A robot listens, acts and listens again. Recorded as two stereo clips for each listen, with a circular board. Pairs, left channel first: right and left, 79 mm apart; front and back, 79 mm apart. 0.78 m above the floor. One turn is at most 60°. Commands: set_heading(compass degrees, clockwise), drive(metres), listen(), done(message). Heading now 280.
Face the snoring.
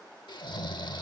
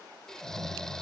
set_heading(340)
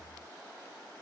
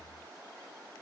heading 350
set_heading(0)
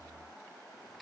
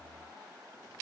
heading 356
listen()
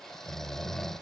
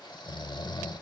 done("Facing the snoring.")